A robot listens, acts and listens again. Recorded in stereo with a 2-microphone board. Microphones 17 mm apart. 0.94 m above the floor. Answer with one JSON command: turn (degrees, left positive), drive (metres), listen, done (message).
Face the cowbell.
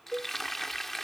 {"turn": 30}
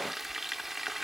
{"listen": true}
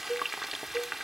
{"turn": 140}
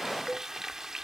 {"listen": true}
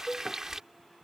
{"turn": 15}
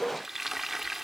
{"listen": true}
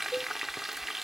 {"done": "Facing the cowbell."}